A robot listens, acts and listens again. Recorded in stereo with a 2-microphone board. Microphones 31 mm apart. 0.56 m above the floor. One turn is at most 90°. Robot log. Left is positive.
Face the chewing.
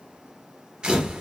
cmd idle
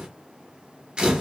cmd idle
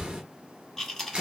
cmd yaw +30
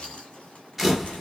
cmd idle
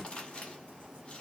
note: So it is at 145° left.
cmd yaw +90
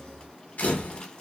note: Nothing new. It was at 55° left.
cmd yaw +55
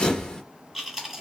note: The chewing is now 10° right.
cmd yaw -10
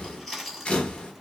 end: Facing the chewing.